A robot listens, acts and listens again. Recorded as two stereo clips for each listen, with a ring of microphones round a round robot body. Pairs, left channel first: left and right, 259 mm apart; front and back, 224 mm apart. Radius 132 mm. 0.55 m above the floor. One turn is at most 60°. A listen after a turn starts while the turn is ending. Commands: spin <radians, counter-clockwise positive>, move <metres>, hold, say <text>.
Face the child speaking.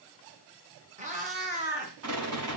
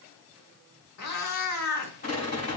hold
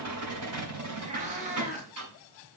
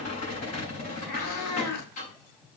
hold
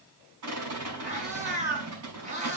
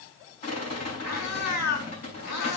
say I can't make out a child speaking to turn to.